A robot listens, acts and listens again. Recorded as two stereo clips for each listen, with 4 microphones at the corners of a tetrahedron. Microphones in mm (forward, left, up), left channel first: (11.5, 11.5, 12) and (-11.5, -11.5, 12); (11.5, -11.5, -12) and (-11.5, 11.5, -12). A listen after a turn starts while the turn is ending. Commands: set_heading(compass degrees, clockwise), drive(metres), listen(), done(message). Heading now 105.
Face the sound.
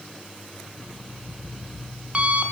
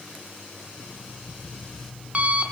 set_heading(285)
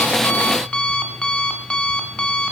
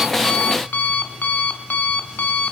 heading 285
set_heading(300)
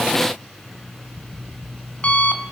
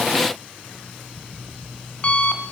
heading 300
done("Facing the alarm clock.")